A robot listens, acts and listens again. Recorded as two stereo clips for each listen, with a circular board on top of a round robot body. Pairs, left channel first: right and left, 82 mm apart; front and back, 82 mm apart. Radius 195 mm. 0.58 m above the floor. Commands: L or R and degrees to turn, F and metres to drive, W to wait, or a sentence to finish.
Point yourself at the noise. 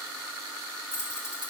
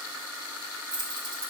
R150
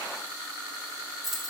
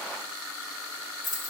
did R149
Facing the keys jangling.